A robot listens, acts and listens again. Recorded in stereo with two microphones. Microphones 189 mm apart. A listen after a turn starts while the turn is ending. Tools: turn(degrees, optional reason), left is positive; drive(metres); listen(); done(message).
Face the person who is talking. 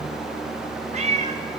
listen()
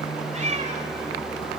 listen()
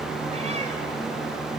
done("I can't make out anyone speaking, only a cat meowing.")